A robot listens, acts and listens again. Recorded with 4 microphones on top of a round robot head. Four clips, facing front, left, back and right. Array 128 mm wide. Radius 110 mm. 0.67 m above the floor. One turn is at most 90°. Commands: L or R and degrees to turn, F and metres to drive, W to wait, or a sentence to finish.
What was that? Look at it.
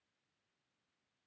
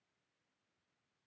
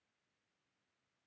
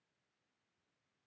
W
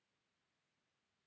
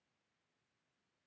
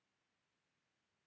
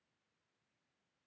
W
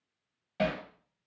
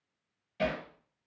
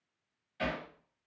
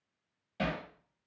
R15
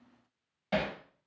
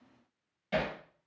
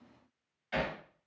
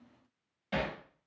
Found it: hammering, straight ahead, under 1 m away.